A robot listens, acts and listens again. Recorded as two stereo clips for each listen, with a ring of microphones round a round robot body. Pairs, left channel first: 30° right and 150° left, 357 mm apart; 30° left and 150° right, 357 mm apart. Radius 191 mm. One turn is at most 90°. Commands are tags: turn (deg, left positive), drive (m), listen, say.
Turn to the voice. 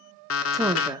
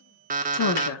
<turn deg="70"/>
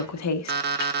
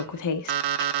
<say>Found it: a woman speaking, straight ahead.</say>